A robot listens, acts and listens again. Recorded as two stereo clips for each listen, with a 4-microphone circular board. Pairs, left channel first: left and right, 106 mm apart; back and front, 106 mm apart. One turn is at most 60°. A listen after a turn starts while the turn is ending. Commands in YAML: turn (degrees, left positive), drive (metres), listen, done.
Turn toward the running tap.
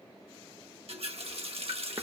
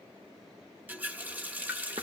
turn: -60
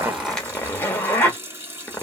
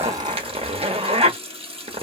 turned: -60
turn: -20
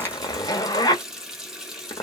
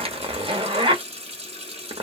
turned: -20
done: "Found it: a running tap, straight ahead, 1 to 2 m away."